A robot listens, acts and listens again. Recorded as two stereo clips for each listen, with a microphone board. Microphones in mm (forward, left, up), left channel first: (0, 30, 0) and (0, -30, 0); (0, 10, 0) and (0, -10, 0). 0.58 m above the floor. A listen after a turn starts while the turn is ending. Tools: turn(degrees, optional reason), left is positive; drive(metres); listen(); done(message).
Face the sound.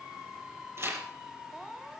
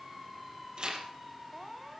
turn(degrees=-50, reason="The tearing paper: about 50° right or 130° right.")
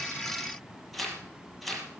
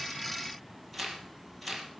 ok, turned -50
done("Found it: tearing paper, straight ahead, over 4 m away.")